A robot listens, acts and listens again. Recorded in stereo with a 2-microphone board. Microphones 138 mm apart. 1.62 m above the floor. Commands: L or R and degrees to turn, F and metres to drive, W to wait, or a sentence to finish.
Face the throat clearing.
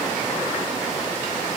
W
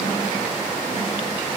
W
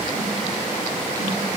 I can't make out throat clearing.